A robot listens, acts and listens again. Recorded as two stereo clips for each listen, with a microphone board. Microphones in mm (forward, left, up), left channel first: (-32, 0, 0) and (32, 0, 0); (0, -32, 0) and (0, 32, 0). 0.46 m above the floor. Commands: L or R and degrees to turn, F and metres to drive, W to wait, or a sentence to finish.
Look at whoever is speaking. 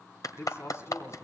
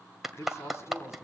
R135
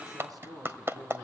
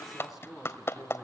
Found it: a man speaking, straight ahead, 2 to 4 m away.